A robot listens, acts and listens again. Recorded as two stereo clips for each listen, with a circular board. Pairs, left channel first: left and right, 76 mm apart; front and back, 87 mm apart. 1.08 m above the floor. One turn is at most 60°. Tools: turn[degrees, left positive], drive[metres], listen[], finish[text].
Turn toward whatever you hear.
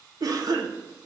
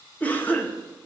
Thought: The cough: 65° right.
Action: turn[-60]
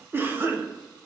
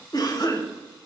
Thought: The cough is now 30° right.
Action: turn[-30]
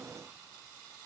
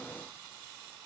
Action: listen[]
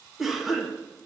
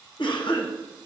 Action: finish[Found it: a cough, straight ahead, 1 to 2 m away.]